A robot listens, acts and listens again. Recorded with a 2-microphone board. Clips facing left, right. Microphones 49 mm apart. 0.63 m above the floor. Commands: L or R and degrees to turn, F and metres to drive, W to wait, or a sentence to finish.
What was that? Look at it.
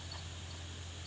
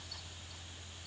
W
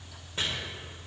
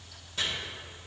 L30
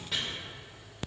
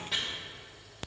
Found it: chopping, straight ahead.